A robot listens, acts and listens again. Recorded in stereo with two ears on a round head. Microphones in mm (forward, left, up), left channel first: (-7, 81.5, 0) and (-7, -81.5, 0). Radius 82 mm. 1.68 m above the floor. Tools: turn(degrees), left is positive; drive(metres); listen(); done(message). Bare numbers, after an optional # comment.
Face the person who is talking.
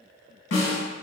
listen()
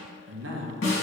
turn(-90)
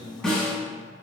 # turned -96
done("Found it: a man speaking, straight ahead.")